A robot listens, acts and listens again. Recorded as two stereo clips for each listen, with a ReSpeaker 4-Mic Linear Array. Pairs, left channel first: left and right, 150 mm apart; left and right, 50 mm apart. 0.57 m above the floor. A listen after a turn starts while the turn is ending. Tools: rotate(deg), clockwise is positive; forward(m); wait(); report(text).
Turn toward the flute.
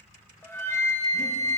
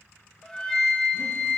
rotate(-15)
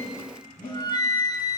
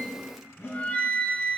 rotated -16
rotate(-150)
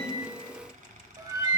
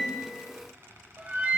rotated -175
rotate(30)
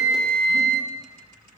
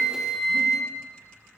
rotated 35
report("Facing the flute.")